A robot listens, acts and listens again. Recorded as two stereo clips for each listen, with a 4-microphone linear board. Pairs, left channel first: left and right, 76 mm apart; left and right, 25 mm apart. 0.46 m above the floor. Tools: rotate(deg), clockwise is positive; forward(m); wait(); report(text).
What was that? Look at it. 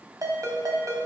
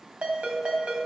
rotate(50)
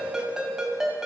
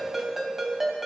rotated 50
report("Found it: a ringtone, straight ahead.")